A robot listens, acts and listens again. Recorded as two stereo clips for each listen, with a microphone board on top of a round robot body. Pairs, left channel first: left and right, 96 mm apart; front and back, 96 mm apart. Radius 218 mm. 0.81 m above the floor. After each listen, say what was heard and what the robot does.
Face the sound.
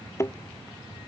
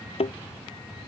The thud: 25° left. Turn 25° left.
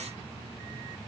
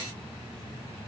Facing where the thud came from. I can't hear it now.